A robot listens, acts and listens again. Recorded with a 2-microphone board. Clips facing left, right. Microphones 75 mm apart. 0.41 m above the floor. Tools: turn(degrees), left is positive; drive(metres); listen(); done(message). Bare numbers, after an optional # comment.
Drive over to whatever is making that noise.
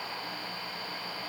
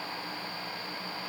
listen()
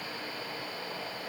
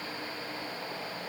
listen()
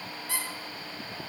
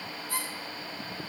turn(90)
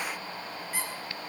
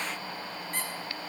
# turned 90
drive(1.0)
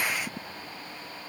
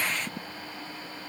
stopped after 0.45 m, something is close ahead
listen()
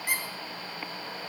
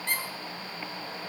# The squeak is now 10° left.
turn(10)
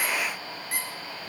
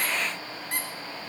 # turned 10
done("Something is in my way. I am facing the squeak but have not reached it.")